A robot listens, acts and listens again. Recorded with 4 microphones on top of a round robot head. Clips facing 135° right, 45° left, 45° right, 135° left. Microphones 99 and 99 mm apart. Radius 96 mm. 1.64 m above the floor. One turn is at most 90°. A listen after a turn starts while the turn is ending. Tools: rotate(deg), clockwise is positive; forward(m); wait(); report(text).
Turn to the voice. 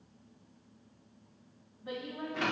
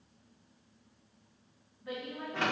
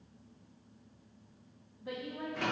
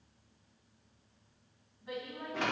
rotate(65)
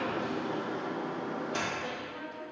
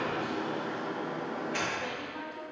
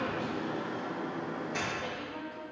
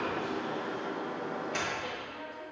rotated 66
report("Facing the woman speaking.")